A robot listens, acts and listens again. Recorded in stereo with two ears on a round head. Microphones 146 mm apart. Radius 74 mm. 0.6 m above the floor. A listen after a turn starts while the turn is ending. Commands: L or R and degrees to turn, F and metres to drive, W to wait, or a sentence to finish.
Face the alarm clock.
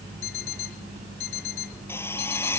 L65
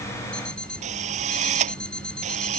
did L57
Found it: an alarm clock, straight ahead.